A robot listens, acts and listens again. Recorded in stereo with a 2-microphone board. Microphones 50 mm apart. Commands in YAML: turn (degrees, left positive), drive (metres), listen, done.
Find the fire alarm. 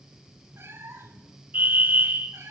turn: -40
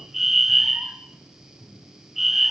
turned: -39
done: "Found it: a fire alarm, straight ahead, 1 to 2 m away."